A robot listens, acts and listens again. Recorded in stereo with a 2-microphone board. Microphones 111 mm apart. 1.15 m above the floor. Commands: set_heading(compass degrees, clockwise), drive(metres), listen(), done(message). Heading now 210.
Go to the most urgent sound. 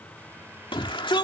set_heading(160)
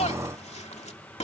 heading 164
set_heading(79)
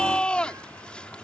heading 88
set_heading(78)
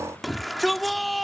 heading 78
drive(1.0)
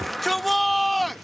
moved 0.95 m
drive(1.0)
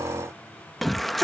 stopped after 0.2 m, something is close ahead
done("Arrived at the shout, straight ahead.")